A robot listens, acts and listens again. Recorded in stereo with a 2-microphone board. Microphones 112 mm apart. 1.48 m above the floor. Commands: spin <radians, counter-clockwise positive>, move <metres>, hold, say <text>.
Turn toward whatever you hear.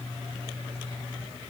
hold
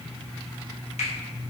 spin 1.57
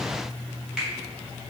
spin -0.17
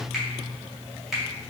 say Found it: a finger snap, straight ahead.